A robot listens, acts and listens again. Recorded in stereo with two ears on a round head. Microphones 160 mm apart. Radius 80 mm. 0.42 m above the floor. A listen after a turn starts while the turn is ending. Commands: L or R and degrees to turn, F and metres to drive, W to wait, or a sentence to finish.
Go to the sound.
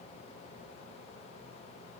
W
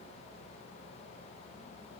W
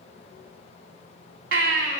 R75
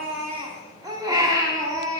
R20
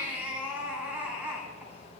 R10
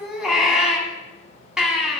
F1.0
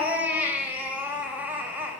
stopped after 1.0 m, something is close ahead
R10
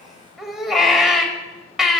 Arrived at the baby crying, straight ahead.